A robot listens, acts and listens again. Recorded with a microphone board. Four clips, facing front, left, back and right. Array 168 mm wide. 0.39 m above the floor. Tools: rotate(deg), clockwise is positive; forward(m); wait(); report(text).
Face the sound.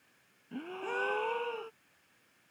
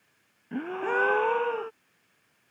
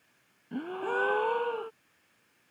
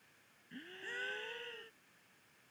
rotate(-110)
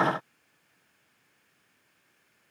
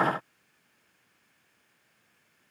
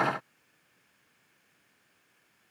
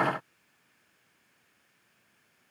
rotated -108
report("Facing where the gasp came from. I can't hear it now.")